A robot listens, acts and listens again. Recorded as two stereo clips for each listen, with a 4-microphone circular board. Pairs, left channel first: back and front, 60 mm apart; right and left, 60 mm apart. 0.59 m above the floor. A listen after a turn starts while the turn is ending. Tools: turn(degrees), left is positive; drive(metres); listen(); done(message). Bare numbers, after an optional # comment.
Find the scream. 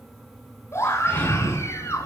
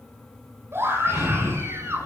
# The scream: 135° left.
turn(135)
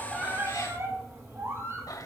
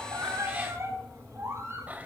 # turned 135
# The scream is now 45° left.
turn(45)
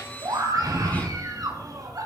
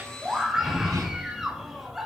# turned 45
done("Facing the scream.")